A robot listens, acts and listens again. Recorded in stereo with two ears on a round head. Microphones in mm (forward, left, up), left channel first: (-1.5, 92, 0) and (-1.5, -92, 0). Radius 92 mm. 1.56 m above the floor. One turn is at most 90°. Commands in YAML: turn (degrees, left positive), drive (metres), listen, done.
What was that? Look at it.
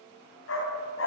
turn: 65
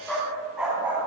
done: "Found it: a dog barking, straight ahead, 2 to 4 m away."